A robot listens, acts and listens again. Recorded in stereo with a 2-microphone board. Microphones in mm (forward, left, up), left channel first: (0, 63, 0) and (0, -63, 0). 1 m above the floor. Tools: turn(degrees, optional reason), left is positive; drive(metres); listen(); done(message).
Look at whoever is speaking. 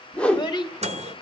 turn(degrees=35, reason="The child speaking: about 35° left or 145° left.")
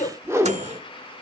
turn(degrees=110, reason="So it is at 110° left.")
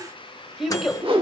done("Facing the child speaking.")